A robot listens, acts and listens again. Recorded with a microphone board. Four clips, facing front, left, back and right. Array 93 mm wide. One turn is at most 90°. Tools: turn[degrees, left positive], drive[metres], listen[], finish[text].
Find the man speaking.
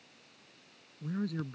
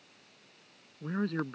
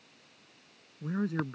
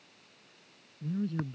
Thought: The man speaking: 115° left.
Action: turn[90]
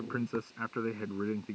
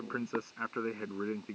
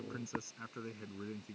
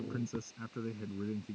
Thought: The man speaking is now 50° left.
Action: turn[50]
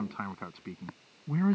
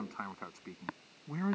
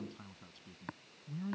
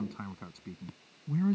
Thought: The man speaking is now 25° left.
Action: turn[25]
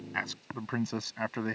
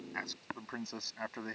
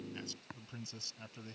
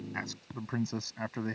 Action: finish[Found it: a man speaking, straight ahead.]